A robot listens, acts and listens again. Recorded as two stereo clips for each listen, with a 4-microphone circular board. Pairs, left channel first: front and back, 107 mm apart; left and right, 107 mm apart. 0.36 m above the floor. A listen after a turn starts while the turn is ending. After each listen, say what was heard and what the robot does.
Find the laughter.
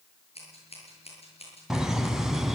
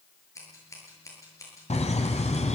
The laughter: 95° left. Turn 95° left.
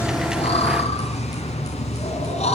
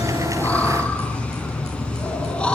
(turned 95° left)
The laughter is now 10° left. Turn 10° left.
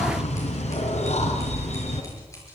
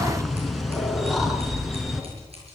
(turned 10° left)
Facing the laughter.